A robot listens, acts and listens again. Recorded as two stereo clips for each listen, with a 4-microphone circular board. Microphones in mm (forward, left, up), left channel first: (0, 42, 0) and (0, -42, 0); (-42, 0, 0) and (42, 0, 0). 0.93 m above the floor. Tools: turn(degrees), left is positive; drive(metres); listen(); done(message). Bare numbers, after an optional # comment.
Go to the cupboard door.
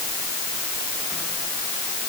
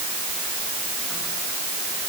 listen()
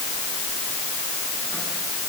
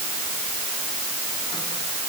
listen()
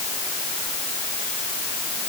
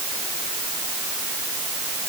done("I can't make out a cupboard door.")